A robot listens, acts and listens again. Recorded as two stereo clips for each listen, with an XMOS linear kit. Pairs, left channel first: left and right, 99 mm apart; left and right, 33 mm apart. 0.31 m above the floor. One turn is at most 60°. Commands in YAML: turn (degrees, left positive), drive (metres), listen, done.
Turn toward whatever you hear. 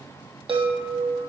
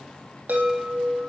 turn: -60
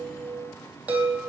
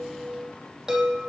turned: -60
turn: -15
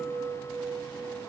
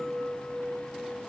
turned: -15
done: "Facing the chime."